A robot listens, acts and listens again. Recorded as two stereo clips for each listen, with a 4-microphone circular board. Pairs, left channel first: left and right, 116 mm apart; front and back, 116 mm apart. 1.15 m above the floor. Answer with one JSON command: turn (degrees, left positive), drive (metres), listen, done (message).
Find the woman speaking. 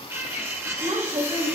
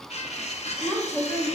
{"turn": -80}
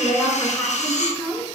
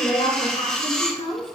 {"turn": 10}
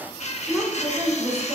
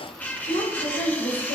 {"turn": -15}
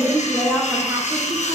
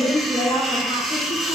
{"turn": -10}
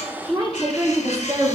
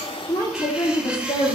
{"turn": -25}
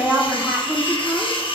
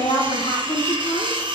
{"turn": 10}
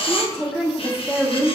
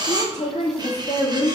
{"done": "Found it: a woman speaking, straight ahead, 1 to 2 m away."}